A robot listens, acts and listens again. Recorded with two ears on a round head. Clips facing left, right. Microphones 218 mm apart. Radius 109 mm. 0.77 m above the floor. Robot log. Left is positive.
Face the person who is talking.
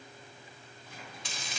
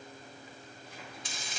cmd idle
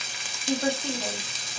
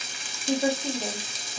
cmd yaw -30
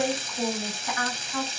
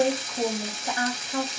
note: So it is at 145° right.
cmd yaw -145
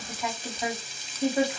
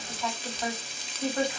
note: The woman speaking is now 10° left.
cmd yaw +10
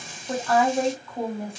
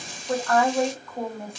end: Facing the woman speaking.